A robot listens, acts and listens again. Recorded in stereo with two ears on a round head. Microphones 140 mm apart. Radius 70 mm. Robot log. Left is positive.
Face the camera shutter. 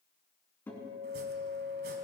cmd idle
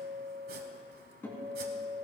cmd idle
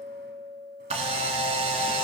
note: The camera shutter: about 40° right or 140° right.
cmd yaw -40
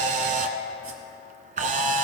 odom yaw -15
note: So it is at 130° right.
cmd yaw -130
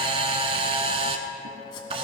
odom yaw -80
note: The camera shutter is now 40° right.
cmd yaw -40
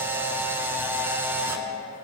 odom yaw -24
note: The camera shutter is now 15° right.
cmd yaw -15
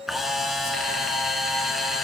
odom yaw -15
end: Facing the camera shutter.